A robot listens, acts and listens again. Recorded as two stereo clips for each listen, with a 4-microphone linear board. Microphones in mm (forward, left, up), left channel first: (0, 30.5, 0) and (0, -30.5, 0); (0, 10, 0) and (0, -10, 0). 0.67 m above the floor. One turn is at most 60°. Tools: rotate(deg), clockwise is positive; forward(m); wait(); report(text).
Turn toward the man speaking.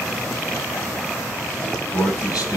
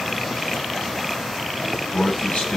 rotate(-60)
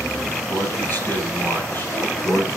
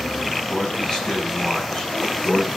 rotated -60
rotate(-35)
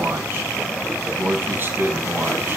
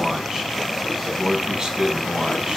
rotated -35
rotate(30)
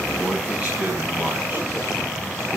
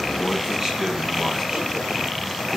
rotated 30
wait()
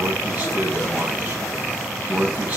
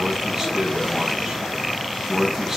rotate(20)
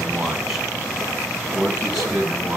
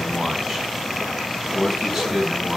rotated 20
report("Facing the man speaking.")